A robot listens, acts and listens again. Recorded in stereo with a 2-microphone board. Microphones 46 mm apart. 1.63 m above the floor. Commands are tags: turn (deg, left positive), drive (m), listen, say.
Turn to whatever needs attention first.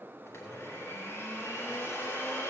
<listen/>
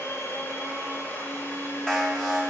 <turn deg="30"/>
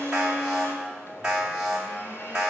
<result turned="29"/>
<turn deg="-15"/>
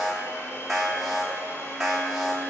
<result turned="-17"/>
<say>Found it: an alarm, straight ahead.</say>